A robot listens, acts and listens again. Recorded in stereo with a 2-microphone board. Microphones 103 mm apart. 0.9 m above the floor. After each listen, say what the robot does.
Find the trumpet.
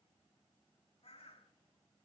Keep listening.
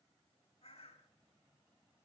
Keep listening.
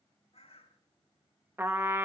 Turn 25° right.
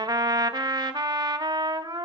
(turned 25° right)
Turn 130° right.
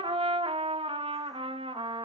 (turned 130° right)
Turn 80° right.
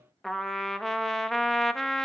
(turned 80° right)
Found it: a trumpet, straight ahead.